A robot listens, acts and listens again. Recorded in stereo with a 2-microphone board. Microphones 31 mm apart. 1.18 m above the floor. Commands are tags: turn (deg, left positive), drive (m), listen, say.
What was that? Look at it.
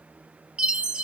<turn deg="-35"/>
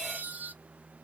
<turn deg="-110"/>
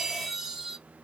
<turn deg="-15"/>
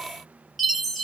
<say>Found it: a chime, straight ahead.</say>